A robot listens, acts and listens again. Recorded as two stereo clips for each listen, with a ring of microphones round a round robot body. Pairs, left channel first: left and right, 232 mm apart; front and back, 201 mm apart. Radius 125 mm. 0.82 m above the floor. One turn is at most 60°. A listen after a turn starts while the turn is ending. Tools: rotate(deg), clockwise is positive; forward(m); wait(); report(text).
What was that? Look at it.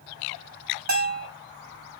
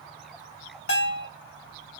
rotate(40)
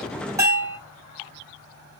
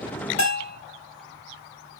rotate(15)
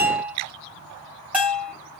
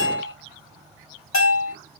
report("Found it: a bell, straight ahead, 2 to 4 m away.")